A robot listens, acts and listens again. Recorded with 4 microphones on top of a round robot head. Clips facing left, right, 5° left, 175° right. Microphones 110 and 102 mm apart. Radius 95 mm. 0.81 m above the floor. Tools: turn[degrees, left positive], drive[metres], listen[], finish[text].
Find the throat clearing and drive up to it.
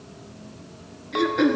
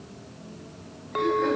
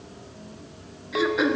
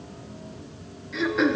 Thought: The throat clearing: 90° left.
Action: turn[90]
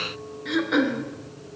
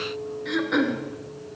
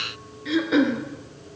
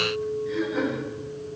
Action: drive[1.0]
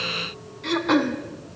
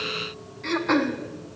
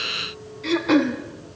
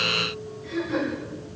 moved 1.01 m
Action: drive[1.0]
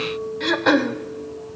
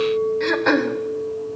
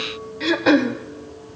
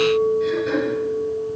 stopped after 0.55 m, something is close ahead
Thought: The throat clearing is now 10° left.
Action: turn[10]
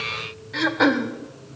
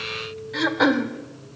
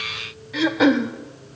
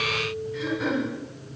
Action: finish[Arrived at the throat clearing, straight ahead.]